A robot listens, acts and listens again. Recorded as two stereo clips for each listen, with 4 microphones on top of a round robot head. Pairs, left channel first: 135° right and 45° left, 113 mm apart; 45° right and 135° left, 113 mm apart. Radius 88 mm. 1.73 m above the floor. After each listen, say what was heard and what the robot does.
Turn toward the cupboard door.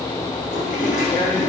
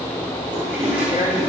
Keep listening.
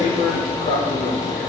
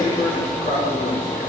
Keep listening.
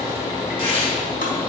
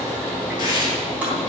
I can't make out a cupboard door to turn to.